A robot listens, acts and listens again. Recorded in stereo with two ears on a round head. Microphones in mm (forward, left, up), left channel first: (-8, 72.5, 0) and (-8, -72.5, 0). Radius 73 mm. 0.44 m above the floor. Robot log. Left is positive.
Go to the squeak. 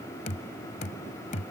cmd idle
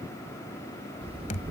note: The squeak: about 35° right or 145° right.
cmd yaw -35
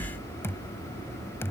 note: So it is at 110° right.
cmd yaw -110
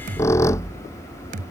note: The squeak is now 15° left.
cmd yaw +15
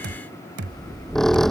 cmd fwd 1.0
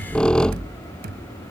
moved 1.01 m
cmd fwd 1.0
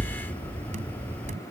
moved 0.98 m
note: The squeak is now 10° left.
cmd yaw +10
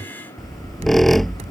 cmd fwd 1.0
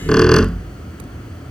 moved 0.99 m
cmd fwd 1.0
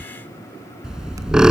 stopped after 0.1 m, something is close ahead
end: I am next to the squeak.